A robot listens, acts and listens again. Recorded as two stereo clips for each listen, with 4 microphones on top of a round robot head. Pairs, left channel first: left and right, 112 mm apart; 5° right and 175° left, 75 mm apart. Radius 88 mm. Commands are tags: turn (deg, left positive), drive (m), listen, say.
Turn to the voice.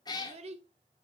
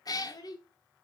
<turn deg="-50"/>
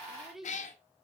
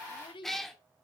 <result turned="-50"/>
<say>Facing the child speaking, under 1 m away.</say>